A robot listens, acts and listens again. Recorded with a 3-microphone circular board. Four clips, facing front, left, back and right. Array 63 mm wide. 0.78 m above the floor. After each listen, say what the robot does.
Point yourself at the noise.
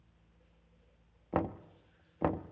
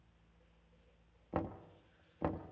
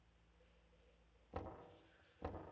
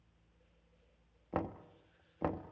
Facing the knocking, under 1 m away.